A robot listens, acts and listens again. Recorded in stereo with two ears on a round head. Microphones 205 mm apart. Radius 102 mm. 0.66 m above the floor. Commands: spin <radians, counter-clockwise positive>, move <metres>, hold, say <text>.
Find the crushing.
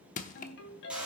spin 0.61
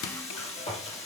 hold
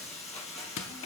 spin 1.92
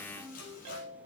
hold
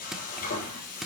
say Found it: crushing, straight ahead, 1 to 2 m away.